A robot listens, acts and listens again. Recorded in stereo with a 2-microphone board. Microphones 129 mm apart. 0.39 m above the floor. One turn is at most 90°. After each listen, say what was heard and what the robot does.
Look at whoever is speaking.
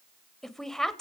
Turn 30° left.
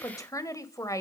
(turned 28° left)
So it is at 150° left. Turn 90° left.
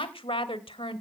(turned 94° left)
The woman speaking is now 55° left. Turn 55° left.
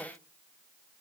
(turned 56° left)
Keep listening.
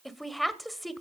Found it: a woman speaking, straight ahead.